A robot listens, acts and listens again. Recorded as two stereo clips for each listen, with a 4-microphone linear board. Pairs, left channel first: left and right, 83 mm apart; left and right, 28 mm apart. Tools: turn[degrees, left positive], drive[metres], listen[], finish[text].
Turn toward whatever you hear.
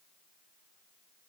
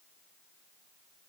Action: listen[]
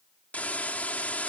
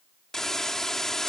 Thought: The hiss: about 20° left or 160° left.
Action: turn[20]
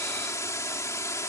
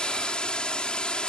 Thought: So it is at 140° left.
Action: turn[140]
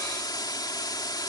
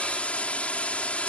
Thought: The hiss is now 55° left.
Action: turn[55]
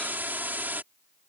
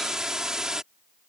Thought: The hiss is now 25° right.
Action: turn[-25]
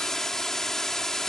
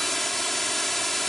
Action: finish[Found it: a hiss, straight ahead.]